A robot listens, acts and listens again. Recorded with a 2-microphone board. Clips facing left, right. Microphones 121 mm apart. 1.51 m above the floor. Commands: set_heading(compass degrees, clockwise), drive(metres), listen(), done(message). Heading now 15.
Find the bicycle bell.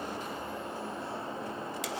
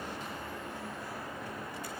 listen()
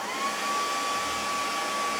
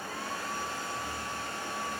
listen()
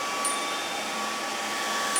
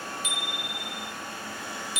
set_heading(335)
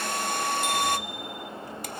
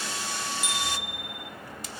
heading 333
done("Facing the bicycle bell, 2 to 4 m away.")